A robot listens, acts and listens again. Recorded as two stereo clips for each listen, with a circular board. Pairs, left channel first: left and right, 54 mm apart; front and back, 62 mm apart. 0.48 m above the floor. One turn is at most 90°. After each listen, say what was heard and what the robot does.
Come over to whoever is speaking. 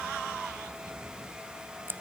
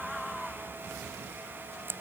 Keep listening.
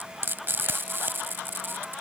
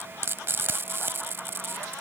Keep listening.
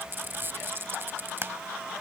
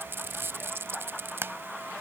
I can't make out anyone speaking to turn to.